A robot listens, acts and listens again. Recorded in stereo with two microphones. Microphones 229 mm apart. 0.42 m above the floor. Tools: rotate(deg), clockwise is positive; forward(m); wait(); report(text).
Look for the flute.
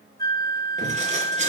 rotate(-20)
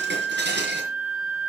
report("Facing the flute, over 4 m away.")